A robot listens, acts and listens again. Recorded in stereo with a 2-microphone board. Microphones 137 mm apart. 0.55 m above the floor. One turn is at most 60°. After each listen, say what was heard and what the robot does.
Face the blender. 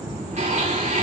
The blender: about 50° right or 130° right. Turn 50° right.
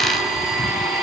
Facing the blender, over 4 m away.